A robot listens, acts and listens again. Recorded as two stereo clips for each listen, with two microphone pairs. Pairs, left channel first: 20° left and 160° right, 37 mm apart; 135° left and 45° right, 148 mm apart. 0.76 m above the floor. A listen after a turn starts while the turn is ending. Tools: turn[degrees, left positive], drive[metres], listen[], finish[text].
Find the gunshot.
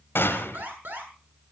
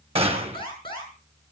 Action: finish[Facing the gunshot, 2 to 4 m away.]